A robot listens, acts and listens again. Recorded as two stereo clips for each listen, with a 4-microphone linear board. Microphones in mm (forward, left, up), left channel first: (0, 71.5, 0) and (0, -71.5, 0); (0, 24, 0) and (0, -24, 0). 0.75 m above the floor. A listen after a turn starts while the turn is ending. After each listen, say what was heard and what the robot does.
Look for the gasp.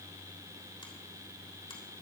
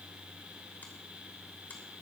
Keep listening.
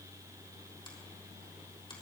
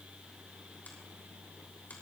Keep listening.
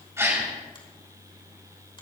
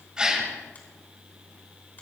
The gasp: about 20° right or 160° right. Turn 20° right.
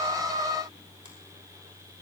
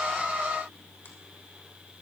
Keep listening.
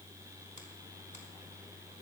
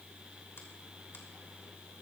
I heard a gasp, but can't make it out now. It was about straight ahead or 140° right.